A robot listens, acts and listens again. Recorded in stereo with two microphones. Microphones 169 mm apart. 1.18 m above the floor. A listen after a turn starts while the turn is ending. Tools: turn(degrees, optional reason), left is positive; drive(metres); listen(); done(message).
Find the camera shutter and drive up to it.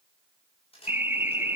turn(degrees=35, reason="The camera shutter: about 35° left or 145° left.")
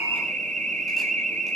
listen()
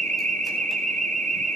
listen()
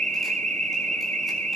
done("I heard a camera shutter, but can't make it out now. It was about straight ahead or 110° left. I did not reach it.")